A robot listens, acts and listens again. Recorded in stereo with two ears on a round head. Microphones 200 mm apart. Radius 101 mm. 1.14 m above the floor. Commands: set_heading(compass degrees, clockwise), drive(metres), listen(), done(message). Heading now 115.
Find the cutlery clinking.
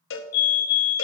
listen()
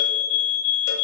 listen()
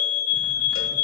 done("I can't make out cutlery clinking, only a fire alarm and a cowbell.")